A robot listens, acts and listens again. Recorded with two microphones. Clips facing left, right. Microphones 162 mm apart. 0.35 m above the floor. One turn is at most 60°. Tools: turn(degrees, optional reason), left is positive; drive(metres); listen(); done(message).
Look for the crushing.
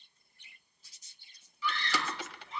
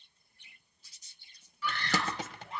turn(degrees=-40, reason="The crushing: about 40° right or 140° right.")
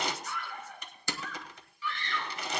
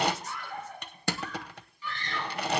turn(degrees=-60, reason="So it is at 95° right.")
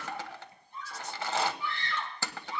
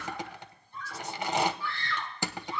turn(degrees=-20, reason="The crushing is now 20° right.")
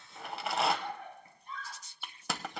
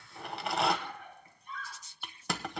done("Facing the crushing, under 1 m away.")